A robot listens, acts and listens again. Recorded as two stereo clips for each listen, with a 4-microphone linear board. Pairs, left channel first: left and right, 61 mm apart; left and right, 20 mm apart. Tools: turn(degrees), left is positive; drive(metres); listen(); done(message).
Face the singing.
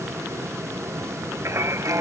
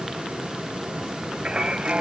turn(degrees=-50)
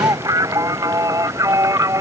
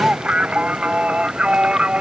turn(degrees=-65)
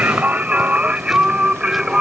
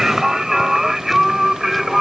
turn(degrees=-10)
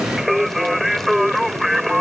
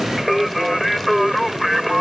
done("Facing the singing.")